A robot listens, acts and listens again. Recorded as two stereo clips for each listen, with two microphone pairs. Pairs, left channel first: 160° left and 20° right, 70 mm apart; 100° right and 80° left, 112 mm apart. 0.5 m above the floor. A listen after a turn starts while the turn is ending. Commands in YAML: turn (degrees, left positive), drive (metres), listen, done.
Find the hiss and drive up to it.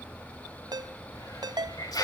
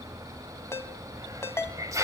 turn: 140
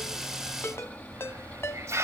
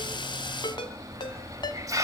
turn: 25
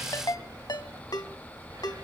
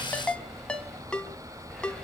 listen: true
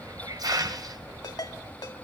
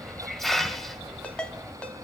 turn: -10
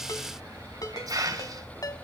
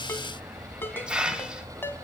drive: 1.0
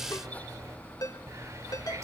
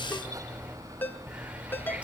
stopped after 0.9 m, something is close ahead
turn: 10
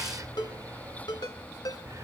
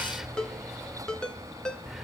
done: "Arrived at the hiss, straight ahead."